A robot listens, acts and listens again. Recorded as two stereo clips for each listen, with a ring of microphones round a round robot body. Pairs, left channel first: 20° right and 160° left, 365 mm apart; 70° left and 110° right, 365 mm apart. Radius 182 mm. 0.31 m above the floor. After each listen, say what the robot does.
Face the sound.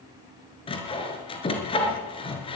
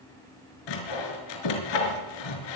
Turn 55° left.
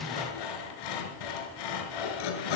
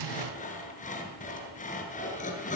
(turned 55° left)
Facing the sawing.